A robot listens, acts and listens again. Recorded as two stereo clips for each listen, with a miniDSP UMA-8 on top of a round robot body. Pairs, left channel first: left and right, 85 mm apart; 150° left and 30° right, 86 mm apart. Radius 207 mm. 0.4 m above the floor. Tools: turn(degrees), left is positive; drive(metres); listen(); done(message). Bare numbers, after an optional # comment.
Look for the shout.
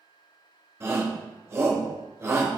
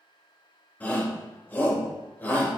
# The shout: 145° right.
turn(-145)
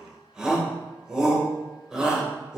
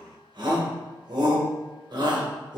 # The shout is now 10° right.
turn(-10)
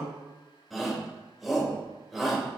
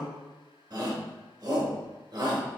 done("Facing the shout.")